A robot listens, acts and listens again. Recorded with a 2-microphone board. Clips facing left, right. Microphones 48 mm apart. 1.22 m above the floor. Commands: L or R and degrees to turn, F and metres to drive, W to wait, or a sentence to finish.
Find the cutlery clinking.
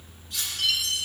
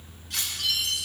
R90
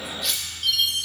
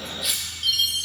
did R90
Facing the cutlery clinking, 2 to 4 m away.